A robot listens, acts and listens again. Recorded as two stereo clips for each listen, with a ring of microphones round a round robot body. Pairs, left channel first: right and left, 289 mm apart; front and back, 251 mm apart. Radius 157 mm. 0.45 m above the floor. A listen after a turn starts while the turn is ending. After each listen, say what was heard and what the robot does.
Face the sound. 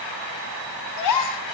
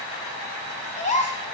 The gasp: 65° right. Turn 65° right.
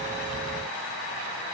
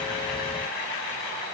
I heard a gasp from this way, but can't make it out now.